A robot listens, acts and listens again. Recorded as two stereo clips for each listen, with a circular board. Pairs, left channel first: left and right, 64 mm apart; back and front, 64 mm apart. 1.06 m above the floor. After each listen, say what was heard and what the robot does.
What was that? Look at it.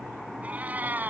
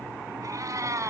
The cat meowing: 30° right. Turn 30° right.
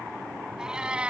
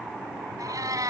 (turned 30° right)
The cat meowing is now 20° right. Turn 20° right.
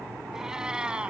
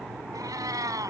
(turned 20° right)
The cat meowing is now 15° right. Turn 15° right.
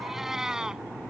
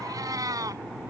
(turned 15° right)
The cat meowing is now 10° right. Turn 10° right.
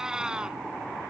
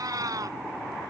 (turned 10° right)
The cat meowing is now 15° right. Turn 15° right.
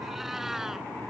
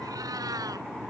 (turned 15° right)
Keep listening.
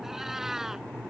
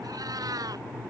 Found it: a cat meowing, straight ahead.